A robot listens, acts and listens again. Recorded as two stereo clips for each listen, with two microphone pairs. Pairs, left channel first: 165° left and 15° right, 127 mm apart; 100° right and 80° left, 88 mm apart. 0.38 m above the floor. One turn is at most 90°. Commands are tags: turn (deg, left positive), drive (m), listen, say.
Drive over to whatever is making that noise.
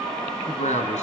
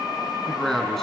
<turn deg="90"/>
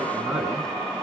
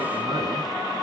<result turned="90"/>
<turn deg="85"/>
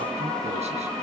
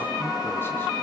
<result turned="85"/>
<listen/>
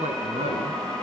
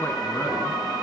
<turn deg="-35"/>
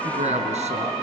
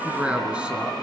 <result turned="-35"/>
<drive m="1.0"/>
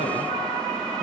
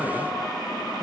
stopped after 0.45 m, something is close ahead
<listen/>
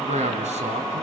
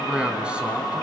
<say>Something is in my way. I am facing the man speaking but have not reached it.</say>